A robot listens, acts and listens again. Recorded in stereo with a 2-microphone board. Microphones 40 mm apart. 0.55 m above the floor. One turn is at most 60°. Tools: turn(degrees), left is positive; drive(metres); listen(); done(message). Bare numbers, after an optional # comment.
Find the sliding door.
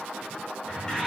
# The sliding door: about 15° left or 165° left.
turn(15)
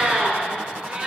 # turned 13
listen()
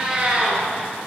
listen()
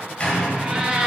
# So it is at 150° left.
turn(60)
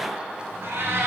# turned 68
# Nothing new. It was at 85° left.
turn(60)
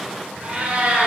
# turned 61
# Nothing new. It was at 20° left.
turn(20)
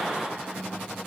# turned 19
done("Facing where the sliding door came from. I can't hear it now.")